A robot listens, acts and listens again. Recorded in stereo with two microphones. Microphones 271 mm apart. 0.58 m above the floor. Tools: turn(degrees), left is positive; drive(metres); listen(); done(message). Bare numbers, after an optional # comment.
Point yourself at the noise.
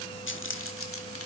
# The keys jangling: about 55° left or 125° left.
turn(55)
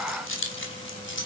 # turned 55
# So it is at 45° left.
turn(45)
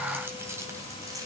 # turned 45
listen()
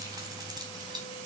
# The keys jangling is now 15° right.
turn(-15)
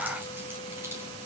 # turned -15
listen()
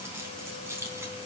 # The keys jangling is now 10° right.
turn(-10)
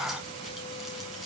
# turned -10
listen()
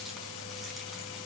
listen()
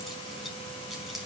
done("Facing where the keys jangling came from. I can't hear it now.")